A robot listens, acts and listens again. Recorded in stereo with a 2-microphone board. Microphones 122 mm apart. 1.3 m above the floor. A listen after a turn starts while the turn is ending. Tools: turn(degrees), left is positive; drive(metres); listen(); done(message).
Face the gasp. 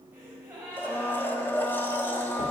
turn(degrees=-20)
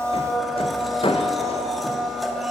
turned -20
listen()
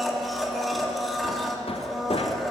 done("I heard a gasp, but can't make it out now. It was about straight ahead or 140° right.")